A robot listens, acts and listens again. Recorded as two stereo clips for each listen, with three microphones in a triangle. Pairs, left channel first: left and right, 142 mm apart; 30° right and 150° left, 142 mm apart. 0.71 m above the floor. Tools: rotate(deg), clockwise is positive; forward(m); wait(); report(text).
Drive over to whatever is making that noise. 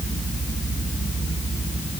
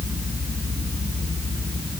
wait()
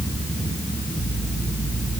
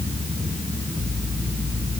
wait()
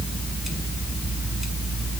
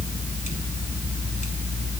report("I can't make out anything to turn to.")